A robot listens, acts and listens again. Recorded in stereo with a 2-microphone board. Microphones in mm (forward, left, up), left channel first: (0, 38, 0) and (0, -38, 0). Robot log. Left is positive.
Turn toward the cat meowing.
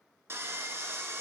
cmd idle
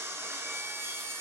cmd idle
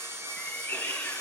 note: The cat meowing: about 30° left or 150° left.
cmd yaw +30
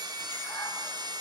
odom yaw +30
cmd idle
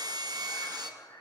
note: So it is at 95° left.
cmd yaw +95
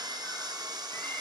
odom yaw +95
cmd idle
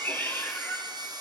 note: The cat meowing is now 30° left.
cmd yaw +30
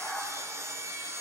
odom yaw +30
end: Facing the cat meowing.